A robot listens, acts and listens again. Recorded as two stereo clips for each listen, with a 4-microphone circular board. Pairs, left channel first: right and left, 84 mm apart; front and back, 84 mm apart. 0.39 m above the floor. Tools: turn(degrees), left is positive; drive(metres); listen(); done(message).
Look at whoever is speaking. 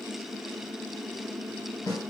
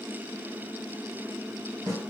listen()
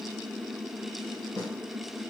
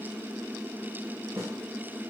listen()
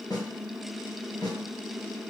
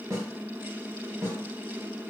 done("I can't make out anyone speaking, only a snare drum.")